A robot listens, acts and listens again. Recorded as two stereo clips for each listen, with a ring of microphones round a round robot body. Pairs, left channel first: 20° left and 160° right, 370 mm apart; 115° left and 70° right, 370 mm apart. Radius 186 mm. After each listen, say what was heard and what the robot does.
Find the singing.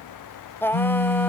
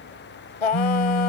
The singing: 105° left. Turn 105° left.
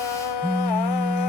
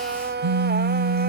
Facing the singing.